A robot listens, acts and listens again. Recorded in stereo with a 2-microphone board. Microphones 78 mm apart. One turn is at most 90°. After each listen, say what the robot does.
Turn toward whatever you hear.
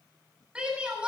Turn 30° right.
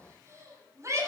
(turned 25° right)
Turn 90° right.
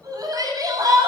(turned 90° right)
Turn 50° right.
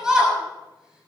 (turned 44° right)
Turn 10° right.
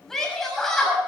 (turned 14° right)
Facing the shout.